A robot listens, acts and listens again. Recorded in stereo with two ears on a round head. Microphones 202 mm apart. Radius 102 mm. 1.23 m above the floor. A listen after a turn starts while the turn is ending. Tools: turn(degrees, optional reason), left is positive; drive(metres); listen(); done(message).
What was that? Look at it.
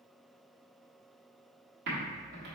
turn(degrees=-50, reason="The typing on a keyboard: about 50° right or 130° right.")
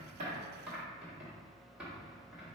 done("Facing the typing on a keyboard.")